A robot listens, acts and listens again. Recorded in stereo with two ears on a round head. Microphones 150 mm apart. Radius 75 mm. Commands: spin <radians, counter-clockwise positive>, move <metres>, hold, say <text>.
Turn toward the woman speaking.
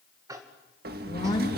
spin 0.44
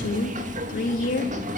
spin 2.27
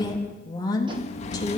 spin 0.44
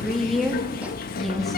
say Found it: a woman speaking, straight ahead, 2 to 4 m away.